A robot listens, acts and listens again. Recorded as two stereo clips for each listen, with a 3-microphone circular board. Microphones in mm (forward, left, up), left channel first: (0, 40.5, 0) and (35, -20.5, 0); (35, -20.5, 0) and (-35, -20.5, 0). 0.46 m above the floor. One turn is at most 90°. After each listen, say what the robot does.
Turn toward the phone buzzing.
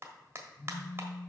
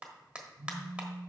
Turn 90° right.
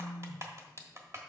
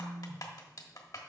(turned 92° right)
Turn 70° right.
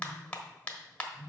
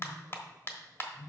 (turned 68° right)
Facing the phone buzzing, 1 to 2 m away.